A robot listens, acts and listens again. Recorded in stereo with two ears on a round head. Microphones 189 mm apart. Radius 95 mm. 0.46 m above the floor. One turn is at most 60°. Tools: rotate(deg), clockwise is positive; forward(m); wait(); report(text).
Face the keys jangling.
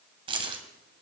rotate(25)
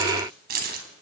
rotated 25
rotate(60)
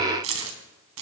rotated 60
rotate(60)
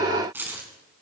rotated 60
rotate(10)
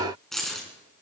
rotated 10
report("Found it: keys jangling, straight ahead.")